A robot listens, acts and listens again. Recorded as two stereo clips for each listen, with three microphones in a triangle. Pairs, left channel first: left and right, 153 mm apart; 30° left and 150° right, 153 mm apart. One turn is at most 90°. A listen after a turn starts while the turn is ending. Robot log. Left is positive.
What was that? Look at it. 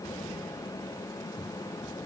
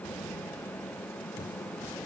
cmd idle
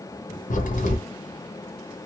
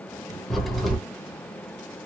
note: The crack: 120° left.
cmd yaw +90
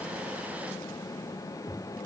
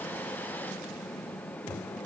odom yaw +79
note: Nothing new. It was at 40° left.
cmd yaw +40
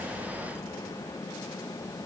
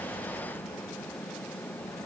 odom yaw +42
end: Facing where the crack came from. I can't hear it now.